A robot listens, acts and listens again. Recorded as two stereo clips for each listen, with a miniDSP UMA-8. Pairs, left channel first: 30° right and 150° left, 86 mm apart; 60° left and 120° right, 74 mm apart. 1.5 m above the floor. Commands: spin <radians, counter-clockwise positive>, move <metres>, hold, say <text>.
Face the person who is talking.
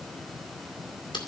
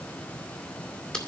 hold
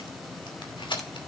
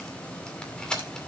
hold
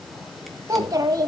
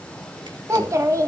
spin -2.88
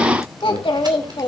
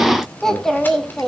spin -0.44
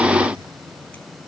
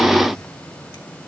hold
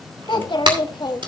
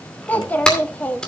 spin -0.17
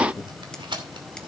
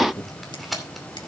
say Found it: a child speaking, straight ahead, 2 to 4 m away.